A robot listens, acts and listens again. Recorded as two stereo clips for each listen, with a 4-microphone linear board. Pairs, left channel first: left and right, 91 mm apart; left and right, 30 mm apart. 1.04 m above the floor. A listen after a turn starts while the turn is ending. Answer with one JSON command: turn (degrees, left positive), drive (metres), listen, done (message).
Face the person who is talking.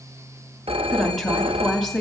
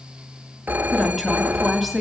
{"turn": 30}
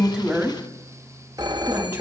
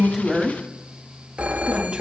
{"listen": true}
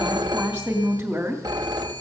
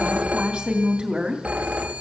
{"turn": -20}
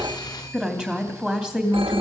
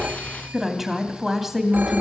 {"done": "Found it: a woman speaking, straight ahead."}